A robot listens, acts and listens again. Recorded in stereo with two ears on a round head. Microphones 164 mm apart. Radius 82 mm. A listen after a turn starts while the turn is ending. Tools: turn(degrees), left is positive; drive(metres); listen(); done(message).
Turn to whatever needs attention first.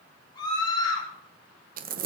turn(degrees=25)
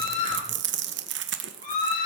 turn(degrees=130)
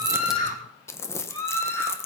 turn(degrees=15)
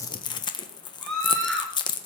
done("Found it: a scream, straight ahead.")